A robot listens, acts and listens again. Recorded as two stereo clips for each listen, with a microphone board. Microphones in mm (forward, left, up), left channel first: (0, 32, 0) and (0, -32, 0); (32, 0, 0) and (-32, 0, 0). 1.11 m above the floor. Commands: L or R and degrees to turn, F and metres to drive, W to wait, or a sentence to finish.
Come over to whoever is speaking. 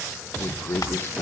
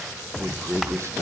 L140
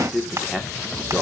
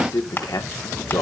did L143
F1.0
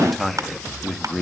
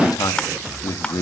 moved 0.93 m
F1.0
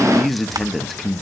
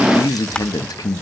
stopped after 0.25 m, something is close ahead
I am next to the man speaking.